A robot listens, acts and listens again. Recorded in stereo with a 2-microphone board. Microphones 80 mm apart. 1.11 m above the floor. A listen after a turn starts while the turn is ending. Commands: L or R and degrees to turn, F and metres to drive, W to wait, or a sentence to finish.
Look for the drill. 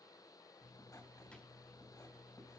W
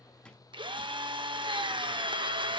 R90
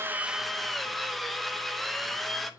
Found it: a drill, straight ahead, under 1 m away.